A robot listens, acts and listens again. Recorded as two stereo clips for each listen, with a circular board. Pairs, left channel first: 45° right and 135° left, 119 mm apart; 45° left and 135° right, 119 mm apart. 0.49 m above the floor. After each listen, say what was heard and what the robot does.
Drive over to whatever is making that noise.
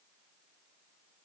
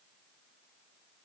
Keep listening.
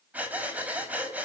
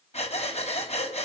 The breathing: 60° left. Turn 60° left.
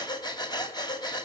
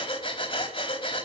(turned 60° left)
Drive 1.0 m forward.
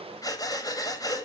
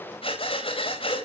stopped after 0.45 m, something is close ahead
The breathing is now 10° left. Turn 10° left.
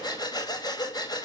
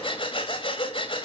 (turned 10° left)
Something is in my way. I am facing the breathing but have not reached it.